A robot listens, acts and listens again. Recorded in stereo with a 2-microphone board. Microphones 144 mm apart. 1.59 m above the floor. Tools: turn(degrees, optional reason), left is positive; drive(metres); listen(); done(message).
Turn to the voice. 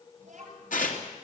turn(degrees=-65, reason="The child speaking: about 65° right or 115° right.")
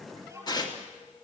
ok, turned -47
turn(degrees=-20, reason="So it is at 20° right.")
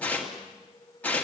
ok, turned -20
listen()
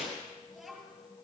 done("Facing the child speaking, over 4 m away.")